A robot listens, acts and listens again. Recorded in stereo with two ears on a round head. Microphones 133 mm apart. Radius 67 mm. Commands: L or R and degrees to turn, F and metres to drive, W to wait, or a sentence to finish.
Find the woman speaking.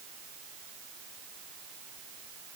W
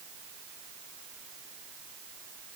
W
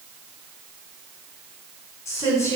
L20
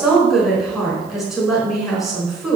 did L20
Found it: a woman speaking, straight ahead, over 4 m away.